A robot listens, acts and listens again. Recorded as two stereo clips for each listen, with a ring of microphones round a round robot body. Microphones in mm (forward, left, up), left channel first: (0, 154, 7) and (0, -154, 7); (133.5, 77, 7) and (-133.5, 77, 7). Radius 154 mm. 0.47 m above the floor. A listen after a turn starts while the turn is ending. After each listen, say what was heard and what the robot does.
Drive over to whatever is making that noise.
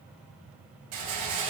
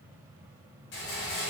The rattle: 55° right. Turn 55° right.
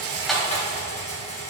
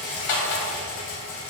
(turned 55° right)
The rattle is now 20° left. Turn 20° left.
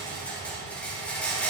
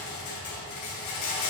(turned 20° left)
Drive 1.0 m forward.
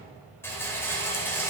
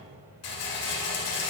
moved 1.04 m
The rattle is now 10° left. Turn 10° left.
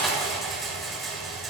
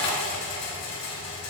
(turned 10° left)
Drive 1.0 m forward.
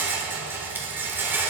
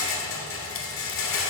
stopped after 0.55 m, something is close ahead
The rattle is now 10° right. Turn 10° right.
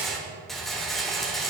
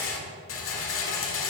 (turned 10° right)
I am next to the rattle.